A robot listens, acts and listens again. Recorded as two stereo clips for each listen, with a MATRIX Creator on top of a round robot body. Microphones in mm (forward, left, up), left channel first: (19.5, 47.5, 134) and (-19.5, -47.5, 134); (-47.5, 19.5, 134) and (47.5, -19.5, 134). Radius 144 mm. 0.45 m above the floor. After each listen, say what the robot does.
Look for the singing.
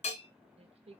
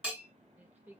Turn 95° right.
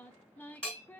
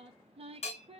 Found it: singing, straight ahead, under 1 m away.